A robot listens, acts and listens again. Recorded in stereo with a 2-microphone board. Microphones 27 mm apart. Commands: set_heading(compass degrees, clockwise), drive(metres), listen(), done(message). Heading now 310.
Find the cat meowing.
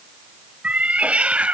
set_heading(5)
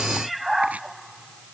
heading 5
done("Found it: a cat meowing, straight ahead.")